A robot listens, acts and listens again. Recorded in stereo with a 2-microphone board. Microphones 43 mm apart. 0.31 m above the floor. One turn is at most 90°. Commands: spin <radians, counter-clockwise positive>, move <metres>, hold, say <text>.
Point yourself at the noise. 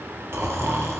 spin -1.22
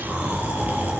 spin -0.70
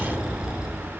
spin -0.26
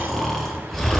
say Facing the snoring.